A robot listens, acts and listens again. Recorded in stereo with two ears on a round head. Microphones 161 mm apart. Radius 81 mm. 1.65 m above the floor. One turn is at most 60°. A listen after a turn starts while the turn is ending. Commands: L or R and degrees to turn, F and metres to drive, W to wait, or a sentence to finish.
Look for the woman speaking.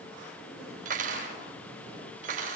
W
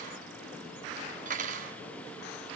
W
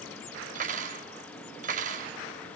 I can't make out a woman speaking to turn to.